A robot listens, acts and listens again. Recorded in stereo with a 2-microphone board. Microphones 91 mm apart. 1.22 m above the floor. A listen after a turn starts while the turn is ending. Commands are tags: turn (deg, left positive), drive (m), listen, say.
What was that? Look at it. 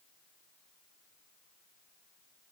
<listen/>
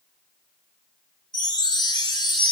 <turn deg="55"/>
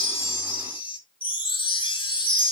<turn deg="70"/>
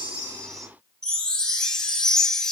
<say>Found it: a chime, straight ahead.</say>